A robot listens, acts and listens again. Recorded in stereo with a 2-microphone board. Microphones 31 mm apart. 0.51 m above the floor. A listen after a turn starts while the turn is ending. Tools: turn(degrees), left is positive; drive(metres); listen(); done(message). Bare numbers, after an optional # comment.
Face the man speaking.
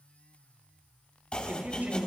# The man speaking: about 60° right or 120° right.
turn(-60)
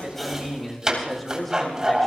done("Facing the man speaking.")